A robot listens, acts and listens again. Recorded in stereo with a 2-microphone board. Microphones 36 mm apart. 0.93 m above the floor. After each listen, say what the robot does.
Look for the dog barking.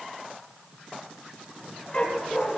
Turn 25° left.
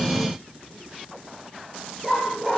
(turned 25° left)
Turn 10° right.
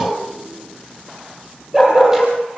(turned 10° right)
Turn 10° right.
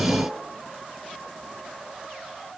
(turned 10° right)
Keep listening.
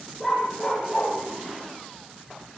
Found it: a dog barking, straight ahead.